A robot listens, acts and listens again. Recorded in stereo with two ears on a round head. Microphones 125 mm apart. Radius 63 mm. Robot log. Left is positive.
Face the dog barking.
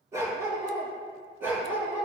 cmd yaw -30
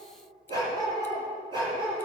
note: So it is at 145° right.
cmd yaw -145
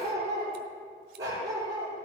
note: The dog barking is now 25° right.
cmd yaw -25
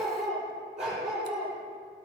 end: Found it: a dog barking, straight ahead, over 4 m away.